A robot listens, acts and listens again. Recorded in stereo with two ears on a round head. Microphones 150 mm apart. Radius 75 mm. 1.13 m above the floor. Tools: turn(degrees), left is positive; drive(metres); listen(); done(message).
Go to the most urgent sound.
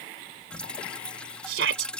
turn(degrees=-90)
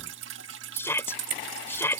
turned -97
turn(degrees=15)
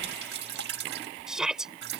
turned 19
drive(metres=1.0)
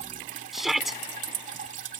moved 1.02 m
drive(metres=1.0)
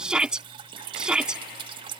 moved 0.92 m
drive(metres=1.0)
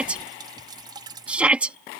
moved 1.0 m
drive(metres=1.0)
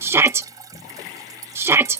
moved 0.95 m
turn(degrees=-15)
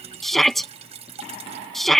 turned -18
drive(metres=1.0)
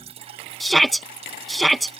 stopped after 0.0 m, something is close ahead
done("Arrived at the shout, straight ahead.")